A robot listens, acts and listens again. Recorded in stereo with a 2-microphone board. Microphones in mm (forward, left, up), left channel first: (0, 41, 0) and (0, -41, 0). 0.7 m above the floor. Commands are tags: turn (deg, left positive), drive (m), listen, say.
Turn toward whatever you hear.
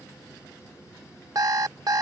<turn deg="-50"/>
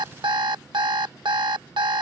<turn deg="-80"/>
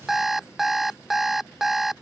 <say>Found it: an alarm clock, straight ahead.</say>